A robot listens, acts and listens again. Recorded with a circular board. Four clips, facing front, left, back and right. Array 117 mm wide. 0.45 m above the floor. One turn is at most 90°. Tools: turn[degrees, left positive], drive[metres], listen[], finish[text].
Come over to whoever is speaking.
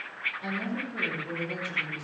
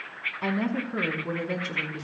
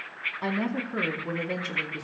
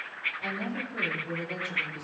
Thought: The woman speaking: 140° left.
Action: turn[90]
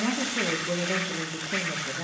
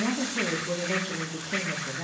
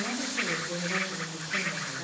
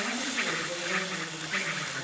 Thought: The woman speaking is now 35° left.
Action: turn[35]
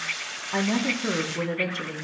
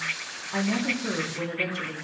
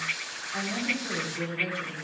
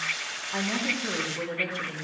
Action: drive[1.0]
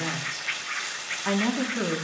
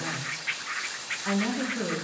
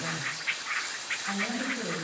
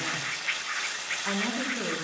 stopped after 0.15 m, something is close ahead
Action: finish[Blocked. The woman speaking is further on, straight ahead.]